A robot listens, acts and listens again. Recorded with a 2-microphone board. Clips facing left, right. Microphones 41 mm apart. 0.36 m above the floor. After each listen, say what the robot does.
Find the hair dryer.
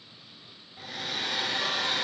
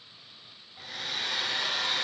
Turn 30° left.
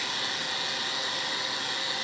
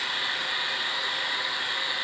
Turn 30° right.
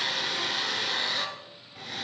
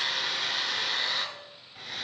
Found it: a hair dryer, straight ahead, 1 to 2 m away.